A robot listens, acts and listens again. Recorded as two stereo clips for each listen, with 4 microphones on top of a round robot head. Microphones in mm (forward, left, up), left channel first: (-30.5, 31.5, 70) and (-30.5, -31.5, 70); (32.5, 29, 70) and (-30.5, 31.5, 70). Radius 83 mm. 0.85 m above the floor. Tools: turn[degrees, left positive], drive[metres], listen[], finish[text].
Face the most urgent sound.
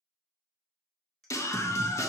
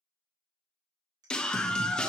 Thought: The scream: 75° left.
Action: turn[75]
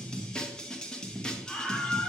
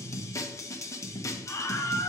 Thought: The scream is now 15° left.
Action: turn[15]
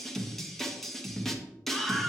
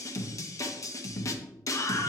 Action: finish[Found it: a scream, straight ahead.]